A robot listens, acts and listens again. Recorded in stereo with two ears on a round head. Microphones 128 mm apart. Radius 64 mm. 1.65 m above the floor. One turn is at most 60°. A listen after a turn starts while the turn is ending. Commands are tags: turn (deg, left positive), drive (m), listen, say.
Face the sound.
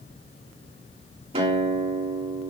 <turn deg="-40"/>
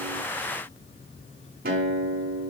<turn deg="-60"/>
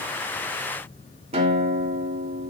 <turn deg="-45"/>
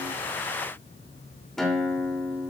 <say>Facing the guitar.</say>